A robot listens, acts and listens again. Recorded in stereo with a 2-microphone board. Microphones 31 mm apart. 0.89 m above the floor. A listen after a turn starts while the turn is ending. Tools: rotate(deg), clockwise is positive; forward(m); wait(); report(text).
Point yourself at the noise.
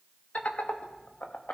rotate(-65)
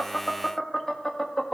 rotate(-25)
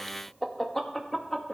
rotate(-10)
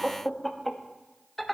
report("Facing the laughter, 1 to 2 m away.")